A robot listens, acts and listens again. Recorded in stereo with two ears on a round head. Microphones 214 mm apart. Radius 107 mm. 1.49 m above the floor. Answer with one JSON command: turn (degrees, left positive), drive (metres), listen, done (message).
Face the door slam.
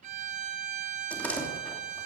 {"turn": 30}
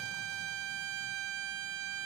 {"listen": true}
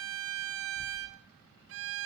{"done": "I heard a door slam, but can't make it out now. It was about 25° right or 145° left."}